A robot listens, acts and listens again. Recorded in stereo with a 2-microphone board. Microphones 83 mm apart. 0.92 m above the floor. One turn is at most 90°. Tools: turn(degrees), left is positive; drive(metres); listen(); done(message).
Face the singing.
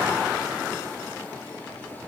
listen()
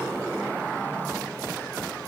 listen()
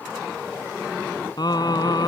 turn(degrees=55)
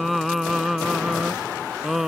done("Facing the singing.")